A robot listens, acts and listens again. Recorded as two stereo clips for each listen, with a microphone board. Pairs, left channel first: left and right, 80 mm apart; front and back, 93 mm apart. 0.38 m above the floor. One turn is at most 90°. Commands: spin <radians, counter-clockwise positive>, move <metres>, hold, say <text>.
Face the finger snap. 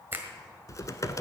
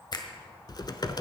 spin -0.52
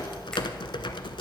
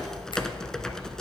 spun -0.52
hold
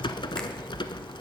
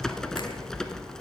hold
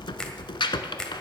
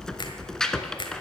spin 0.17
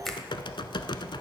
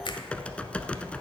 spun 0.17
say Facing the finger snap.